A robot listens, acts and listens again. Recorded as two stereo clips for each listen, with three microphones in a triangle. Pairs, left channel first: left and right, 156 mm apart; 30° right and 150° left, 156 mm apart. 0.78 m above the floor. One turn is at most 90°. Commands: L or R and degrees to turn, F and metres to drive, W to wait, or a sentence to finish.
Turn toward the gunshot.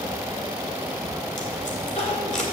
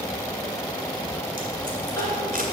W
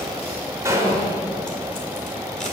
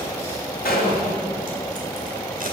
R20
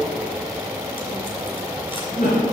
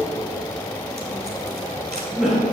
Facing where the gunshot came from. I can't hear it now.